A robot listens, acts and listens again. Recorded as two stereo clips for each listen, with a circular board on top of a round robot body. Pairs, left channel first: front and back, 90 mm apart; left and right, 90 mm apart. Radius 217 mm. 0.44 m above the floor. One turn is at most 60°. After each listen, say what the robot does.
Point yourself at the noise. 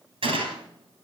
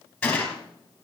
Turn 60° left.
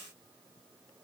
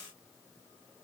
Turn 60° left.
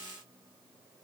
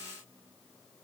Turn 45° left.
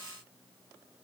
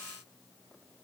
I heard a gunshot from this way, but can't make it out now.